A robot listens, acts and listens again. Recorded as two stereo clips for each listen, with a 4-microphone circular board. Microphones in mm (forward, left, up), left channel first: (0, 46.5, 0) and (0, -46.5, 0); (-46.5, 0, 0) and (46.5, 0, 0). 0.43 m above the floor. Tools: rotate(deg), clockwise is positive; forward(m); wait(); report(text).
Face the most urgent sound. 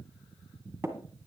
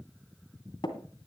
wait()
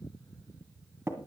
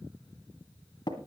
wait()
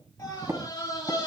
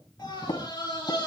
rotate(-130)
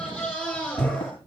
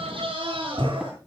report("Facing the scream.")